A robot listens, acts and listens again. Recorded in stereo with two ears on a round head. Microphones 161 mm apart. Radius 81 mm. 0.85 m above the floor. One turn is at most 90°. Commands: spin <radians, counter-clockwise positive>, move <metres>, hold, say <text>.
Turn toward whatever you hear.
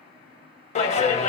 spin 0.70
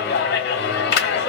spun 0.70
spin 1.57
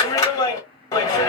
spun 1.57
spin 0.35
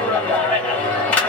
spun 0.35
spin 0.17
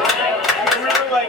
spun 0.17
say Found it: a clap, straight ahead, 1 to 2 m away.